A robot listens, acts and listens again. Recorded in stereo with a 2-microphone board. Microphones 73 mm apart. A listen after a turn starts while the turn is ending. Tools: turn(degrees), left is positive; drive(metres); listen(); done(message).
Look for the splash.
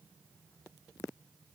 listen()
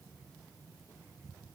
listen()
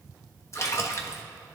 turn(degrees=40)
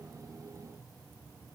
listen()
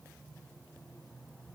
done("I heard a splash, but can't make it out now. It was about straight ahead or 100° left.")